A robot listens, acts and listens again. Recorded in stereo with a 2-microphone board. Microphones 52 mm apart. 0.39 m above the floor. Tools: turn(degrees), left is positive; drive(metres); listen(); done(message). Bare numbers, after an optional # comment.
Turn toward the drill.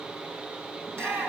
listen()
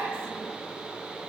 listen()
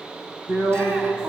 # The drill: about 65° right or 115° right.
turn(-65)
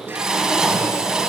# So it is at 15° right.
turn(-15)
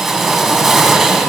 done("Facing the drill, 2 to 4 m away.")